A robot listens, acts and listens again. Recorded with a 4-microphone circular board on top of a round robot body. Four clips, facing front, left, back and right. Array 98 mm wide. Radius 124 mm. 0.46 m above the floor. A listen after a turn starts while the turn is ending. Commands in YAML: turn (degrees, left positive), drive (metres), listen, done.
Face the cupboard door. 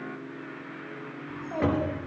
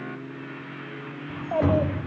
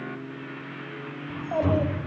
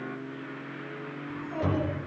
turn: 40
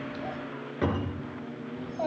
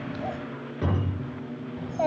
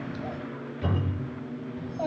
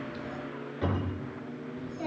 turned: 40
turn: 10
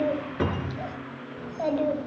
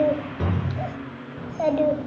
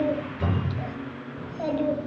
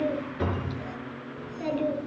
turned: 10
done: "Facing the cupboard door, over 4 m away."